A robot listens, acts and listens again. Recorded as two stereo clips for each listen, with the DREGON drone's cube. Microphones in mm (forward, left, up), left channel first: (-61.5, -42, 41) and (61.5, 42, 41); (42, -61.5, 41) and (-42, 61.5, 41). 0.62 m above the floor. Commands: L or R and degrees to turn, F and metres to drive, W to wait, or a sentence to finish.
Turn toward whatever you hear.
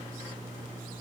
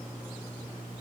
W
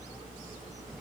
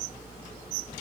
W
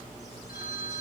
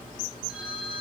R150
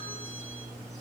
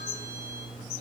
W
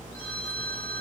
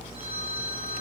R70
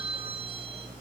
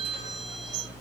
R20
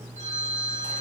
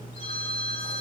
Found it: a phone ringing, straight ahead.